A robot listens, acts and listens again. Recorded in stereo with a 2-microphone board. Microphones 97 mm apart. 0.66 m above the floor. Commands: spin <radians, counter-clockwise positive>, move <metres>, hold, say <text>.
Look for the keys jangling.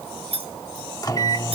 spin -1.57
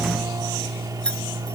spin 0.17
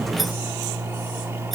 hold
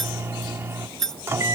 say Found it: keys jangling, straight ahead.